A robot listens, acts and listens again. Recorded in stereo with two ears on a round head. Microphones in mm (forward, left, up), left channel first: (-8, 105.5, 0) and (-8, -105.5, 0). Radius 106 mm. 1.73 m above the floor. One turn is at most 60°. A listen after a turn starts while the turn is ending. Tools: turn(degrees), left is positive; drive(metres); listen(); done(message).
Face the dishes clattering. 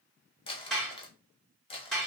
turn(degrees=30)
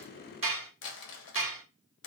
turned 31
turn(degrees=-30)
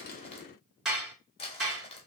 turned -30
done("Facing the dishes clattering, 1 to 2 m away.")